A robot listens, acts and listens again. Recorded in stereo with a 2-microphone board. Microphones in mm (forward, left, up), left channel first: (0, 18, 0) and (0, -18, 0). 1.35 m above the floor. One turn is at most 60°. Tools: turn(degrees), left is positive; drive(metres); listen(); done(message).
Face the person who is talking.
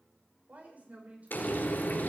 turn(degrees=-45)
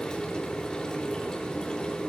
listen()
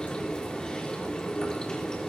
listen()
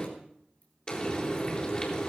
done("I heard a woman speaking, but can't make it out now. It was about straight ahead or 90° right.")